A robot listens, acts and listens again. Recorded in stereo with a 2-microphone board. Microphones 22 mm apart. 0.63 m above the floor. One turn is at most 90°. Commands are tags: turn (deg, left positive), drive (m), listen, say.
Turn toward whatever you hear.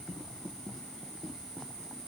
<listen/>
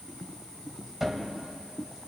<turn deg="-15"/>
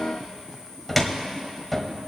<say>Found it: a cupboard door, straight ahead, 1 to 2 m away.</say>